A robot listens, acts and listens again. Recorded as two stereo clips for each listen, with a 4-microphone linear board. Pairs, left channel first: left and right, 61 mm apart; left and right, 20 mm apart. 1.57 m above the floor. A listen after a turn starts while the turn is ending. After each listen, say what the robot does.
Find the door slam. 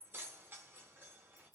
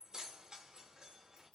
Keep listening.
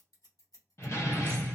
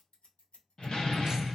Turn 50° left.
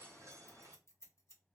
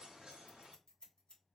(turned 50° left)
Keep listening.
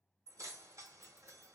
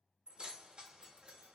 I heard a door slam, but can't make it out now. It was about straight ahead or 80° left.